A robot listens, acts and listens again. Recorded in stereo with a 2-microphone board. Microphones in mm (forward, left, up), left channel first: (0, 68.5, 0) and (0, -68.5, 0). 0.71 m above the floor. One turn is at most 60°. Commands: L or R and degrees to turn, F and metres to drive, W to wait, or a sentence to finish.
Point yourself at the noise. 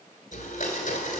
L60
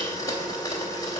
L30
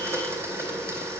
R20
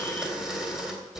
Facing the blender.